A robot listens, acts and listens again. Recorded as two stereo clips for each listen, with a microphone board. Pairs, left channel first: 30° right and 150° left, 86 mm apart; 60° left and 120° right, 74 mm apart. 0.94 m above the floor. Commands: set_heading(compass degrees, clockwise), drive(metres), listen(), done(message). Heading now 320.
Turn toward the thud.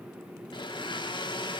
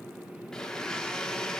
listen()
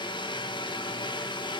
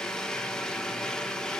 listen()
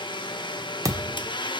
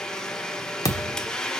set_heading(215)
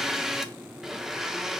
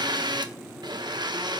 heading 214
done("I heard a thud from this way, but can't make it out now.")